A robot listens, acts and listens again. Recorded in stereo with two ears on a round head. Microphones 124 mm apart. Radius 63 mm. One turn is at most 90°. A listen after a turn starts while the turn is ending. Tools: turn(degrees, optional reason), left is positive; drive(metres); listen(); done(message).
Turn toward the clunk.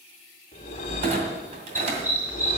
turn(degrees=-45, reason="The clunk: about 45° right or 135° right.")
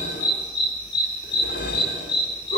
listen()
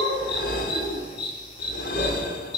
done("I heard a clunk, but can't make it out now. It was about straight ahead or 90° right.")